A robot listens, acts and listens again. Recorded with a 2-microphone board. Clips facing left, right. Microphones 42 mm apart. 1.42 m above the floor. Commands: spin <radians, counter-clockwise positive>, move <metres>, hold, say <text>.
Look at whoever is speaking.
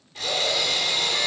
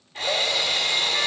hold
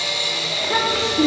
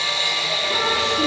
spin 1.13
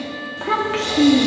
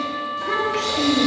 spin 0.87
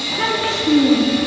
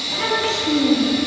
spin 0.26
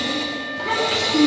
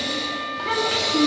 say Facing the child speaking.